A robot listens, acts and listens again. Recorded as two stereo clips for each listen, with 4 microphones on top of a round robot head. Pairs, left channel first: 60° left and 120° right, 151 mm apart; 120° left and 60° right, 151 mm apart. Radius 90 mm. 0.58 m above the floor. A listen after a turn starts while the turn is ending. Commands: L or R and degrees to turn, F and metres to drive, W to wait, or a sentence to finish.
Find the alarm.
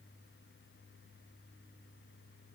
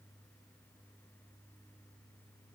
W
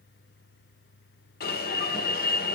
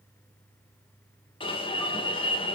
L65
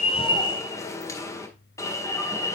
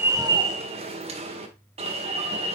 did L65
R10
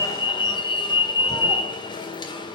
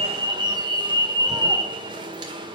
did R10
Facing the alarm.